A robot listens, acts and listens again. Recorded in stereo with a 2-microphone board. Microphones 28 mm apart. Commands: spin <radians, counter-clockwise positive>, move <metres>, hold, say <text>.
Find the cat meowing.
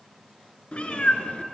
spin 0.87
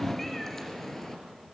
spin 0.26
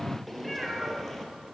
spin 0.17
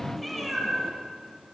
say Found it: a cat meowing, straight ahead.